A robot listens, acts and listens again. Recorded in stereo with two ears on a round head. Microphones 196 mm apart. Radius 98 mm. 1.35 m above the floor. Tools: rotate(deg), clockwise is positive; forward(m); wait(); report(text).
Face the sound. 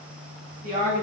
rotate(40)
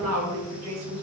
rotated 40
rotate(95)
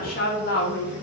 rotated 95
rotate(-50)
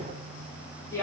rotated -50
rotate(-15)
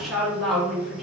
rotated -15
report("Found it: a woman speaking, straight ahead, 2 to 4 m away.")